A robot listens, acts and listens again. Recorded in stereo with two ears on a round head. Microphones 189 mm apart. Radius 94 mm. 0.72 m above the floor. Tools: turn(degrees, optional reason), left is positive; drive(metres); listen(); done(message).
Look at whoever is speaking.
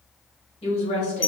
turn(degrees=35, reason="The woman speaking: about 35° left or 145° left.")
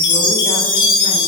listen()
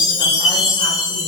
listen()
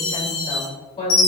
turn(degrees=30, reason="The woman speaking: about 30° left or 150° left.")
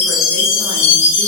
listen()
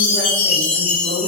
turn(degrees=10, reason="So it is at 10° left.")
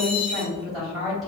done("Found it: a woman speaking, straight ahead.")